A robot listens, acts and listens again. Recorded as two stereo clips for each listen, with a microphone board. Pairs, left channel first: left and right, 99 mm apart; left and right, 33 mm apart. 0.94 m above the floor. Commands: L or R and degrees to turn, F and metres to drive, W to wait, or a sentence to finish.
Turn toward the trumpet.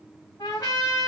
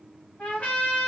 L35
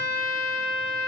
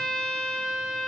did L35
Facing the trumpet, 2 to 4 m away.